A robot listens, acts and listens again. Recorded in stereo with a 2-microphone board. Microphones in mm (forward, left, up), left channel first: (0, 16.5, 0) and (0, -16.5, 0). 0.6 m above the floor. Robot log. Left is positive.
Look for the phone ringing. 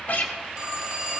note: The phone ringing: about 30° right or 150° right.
cmd yaw -30
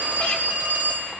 note: So it is at 115° right.
cmd yaw -115
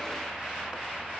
cmd idle
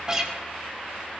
cmd idle
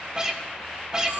note: The phone ringing is now 40° right.
cmd yaw -40
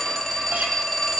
note: The phone ringing is now 10° left.
cmd yaw +10
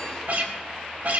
cmd idle
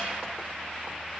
cmd idle
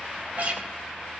end: Facing where the phone ringing came from. I can't hear it now.